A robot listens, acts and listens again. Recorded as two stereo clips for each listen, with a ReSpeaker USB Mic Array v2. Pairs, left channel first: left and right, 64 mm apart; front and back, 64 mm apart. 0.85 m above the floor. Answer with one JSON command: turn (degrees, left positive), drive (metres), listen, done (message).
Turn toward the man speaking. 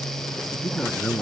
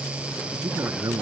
{"turn": 165}
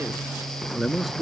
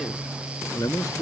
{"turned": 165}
{"done": "Facing the man speaking."}